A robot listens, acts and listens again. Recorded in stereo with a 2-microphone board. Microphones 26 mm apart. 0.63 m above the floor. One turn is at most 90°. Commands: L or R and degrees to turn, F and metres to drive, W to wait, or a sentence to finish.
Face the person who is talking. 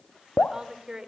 R25
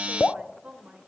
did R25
R90
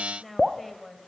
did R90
Facing the woman speaking.